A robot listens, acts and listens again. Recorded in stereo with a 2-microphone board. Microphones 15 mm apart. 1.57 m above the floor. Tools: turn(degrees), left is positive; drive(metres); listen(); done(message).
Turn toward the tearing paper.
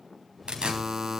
turn(degrees=-65)
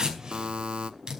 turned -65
turn(degrees=-45)
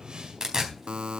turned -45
turn(degrees=-35)
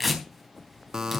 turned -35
done("Found it: tearing paper, straight ahead.")